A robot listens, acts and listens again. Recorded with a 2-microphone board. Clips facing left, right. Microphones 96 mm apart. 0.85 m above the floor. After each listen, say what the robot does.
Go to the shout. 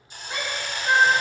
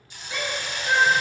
Turn 45° left.
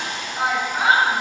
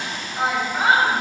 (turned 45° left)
Drive 1.0 m forward.
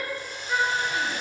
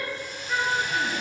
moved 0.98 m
Turn 10° left.
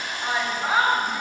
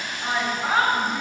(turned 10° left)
Drive 1.0 m forward.
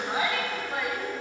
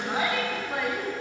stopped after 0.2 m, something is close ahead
Arrived at the shout, straight ahead.